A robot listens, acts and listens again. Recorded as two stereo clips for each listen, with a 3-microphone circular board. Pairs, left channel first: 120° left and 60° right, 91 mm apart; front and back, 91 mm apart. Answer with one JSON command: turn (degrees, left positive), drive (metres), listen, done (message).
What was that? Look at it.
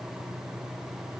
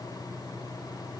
{"listen": true}
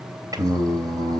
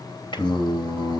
{"turn": -20}
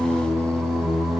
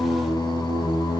{"done": "Found it: singing, straight ahead, 2 to 4 m away."}